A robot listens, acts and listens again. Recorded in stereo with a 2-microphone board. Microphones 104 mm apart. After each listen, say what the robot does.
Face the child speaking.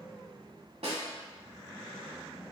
Keep listening.
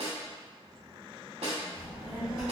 Turn 45° right.
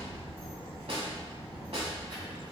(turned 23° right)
Turn 60° right.
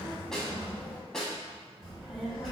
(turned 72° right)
Found it: a child speaking, straight ahead.